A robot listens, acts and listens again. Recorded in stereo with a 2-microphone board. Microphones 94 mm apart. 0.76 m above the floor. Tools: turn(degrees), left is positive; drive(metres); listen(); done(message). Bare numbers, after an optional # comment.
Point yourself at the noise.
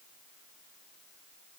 listen()
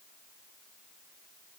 listen()
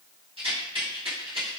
turn(-90)
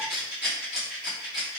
# So it is at 10° right.
turn(-10)
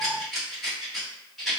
done("Facing the rattle.")